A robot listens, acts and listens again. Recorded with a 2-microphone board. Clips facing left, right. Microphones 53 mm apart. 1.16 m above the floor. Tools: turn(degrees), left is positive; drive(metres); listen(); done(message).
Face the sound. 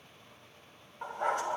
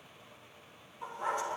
turn(degrees=55)
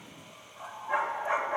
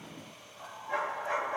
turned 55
turn(degrees=20)
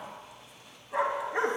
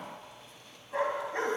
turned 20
turn(degrees=15)
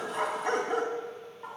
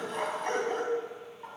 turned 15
turn(degrees=10)
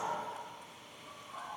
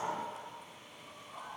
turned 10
done("Found it: a dog barking, straight ahead, 2 to 4 m away.")